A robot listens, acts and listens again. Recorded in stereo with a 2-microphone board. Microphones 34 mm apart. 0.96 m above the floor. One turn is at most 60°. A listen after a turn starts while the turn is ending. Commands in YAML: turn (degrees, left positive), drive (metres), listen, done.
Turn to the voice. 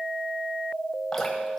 listen: true
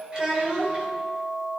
turn: -25
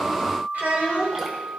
turn: -60
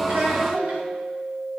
turn: -60
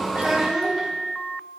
done: "Found it: a child speaking, straight ahead, 2 to 4 m away."